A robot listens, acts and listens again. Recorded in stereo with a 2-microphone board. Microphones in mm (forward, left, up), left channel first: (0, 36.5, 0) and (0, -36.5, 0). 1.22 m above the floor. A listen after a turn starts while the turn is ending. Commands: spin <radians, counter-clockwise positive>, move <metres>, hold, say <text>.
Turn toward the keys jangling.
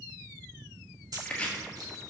hold
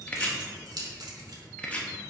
spin -1.05
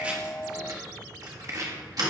spin -1.05
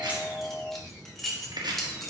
say Found it: keys jangling, straight ahead, 1 to 2 m away.